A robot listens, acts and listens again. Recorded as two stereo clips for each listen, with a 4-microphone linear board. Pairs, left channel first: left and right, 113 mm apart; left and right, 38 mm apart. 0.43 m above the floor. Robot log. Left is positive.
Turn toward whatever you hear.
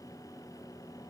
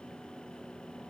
cmd idle
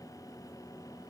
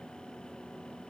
cmd idle
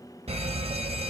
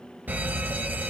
note: The alarm: about 65° right or 115° right.
cmd yaw -65
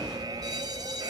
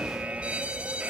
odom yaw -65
note: So it is at 40° right.
cmd yaw -40
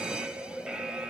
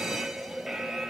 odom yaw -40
note: The alarm is now 10° right.
cmd yaw -10
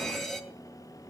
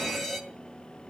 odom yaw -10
end: Found it: an alarm, straight ahead.